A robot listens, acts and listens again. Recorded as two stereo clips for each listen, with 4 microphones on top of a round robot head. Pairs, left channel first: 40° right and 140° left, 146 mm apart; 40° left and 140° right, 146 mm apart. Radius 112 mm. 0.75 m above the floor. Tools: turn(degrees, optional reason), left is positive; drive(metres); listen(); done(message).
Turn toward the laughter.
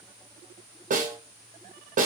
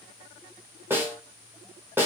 listen()
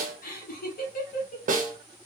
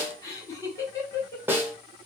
turn(degrees=-30, reason="The laughter: 30° right.")
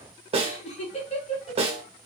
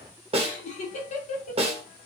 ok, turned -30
done("Facing the laughter.")